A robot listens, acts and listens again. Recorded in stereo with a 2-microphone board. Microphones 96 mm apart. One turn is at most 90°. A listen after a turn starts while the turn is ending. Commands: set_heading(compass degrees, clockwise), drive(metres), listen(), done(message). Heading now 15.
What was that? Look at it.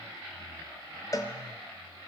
set_heading(340)
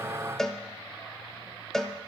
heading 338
done("Facing the cowbell, under 1 m away.")